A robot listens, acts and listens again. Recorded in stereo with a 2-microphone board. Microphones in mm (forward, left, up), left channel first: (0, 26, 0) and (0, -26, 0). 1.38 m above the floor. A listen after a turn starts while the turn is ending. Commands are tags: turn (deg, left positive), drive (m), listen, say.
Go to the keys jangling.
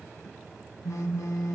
<listen/>
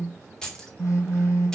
<turn deg="30"/>
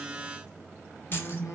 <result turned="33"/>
<listen/>
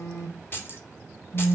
<turn deg="130"/>
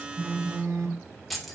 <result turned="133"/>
<drive m="1.0"/>
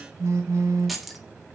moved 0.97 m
<drive m="1.0"/>
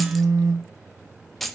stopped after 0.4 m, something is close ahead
<say>I am next to the keys jangling.</say>